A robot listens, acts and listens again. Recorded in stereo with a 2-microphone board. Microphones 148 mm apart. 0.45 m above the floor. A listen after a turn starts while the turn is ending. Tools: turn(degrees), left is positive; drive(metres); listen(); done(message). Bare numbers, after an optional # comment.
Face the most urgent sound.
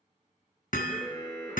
# The alarm: about 35° left or 145° left.
turn(35)
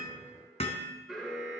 done("Facing the alarm.")